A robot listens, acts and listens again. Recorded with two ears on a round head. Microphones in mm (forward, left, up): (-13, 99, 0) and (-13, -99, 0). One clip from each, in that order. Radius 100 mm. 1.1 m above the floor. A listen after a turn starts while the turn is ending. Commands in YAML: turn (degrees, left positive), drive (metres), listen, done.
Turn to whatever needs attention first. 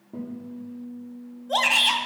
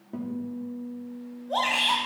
turn: 70
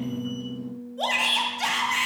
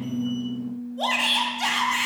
done: "Found it: a shout, straight ahead, 1 to 2 m away."